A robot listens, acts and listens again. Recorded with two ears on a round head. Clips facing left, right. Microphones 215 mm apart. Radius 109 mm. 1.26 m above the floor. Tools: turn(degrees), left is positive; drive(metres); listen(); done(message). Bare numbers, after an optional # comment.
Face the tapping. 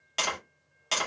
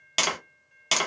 # The tapping: about 50° right or 130° right.
turn(-50)
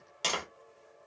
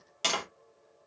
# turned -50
done("Found it: tapping, straight ahead.")